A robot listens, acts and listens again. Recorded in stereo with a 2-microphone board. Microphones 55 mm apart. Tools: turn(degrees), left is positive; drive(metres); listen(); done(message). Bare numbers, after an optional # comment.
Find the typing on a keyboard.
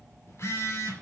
listen()
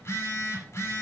listen()
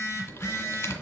# The typing on a keyboard: about 55° left or 125° left.
turn(55)
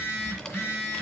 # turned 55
# So it is at 20° left.
turn(20)
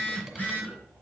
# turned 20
listen()
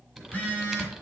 done("Found it: typing on a keyboard, straight ahead.")